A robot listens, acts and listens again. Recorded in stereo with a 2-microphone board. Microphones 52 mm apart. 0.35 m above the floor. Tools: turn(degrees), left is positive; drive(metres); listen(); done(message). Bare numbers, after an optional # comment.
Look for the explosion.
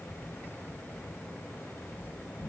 listen()
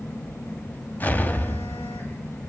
# The explosion: about 35° left or 145° left.
turn(35)
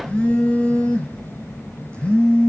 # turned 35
listen()
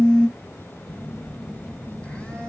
done("I heard an explosion, but can't make it out now. It was about straight ahead or 110° left.")